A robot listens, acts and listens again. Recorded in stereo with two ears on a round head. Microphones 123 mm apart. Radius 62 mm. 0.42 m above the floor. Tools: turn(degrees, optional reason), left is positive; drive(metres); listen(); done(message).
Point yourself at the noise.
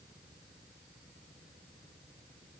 listen()
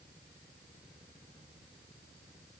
listen()
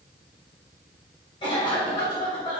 turn(degrees=40, reason="The cough: about 40° left or 140° left.")
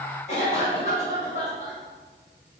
turn(degrees=95, reason="So it is at 95° left.")
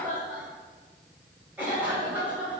turn(degrees=-15, reason="The cough is now 15° right.")
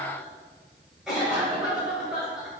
done("Found it: a cough, straight ahead.")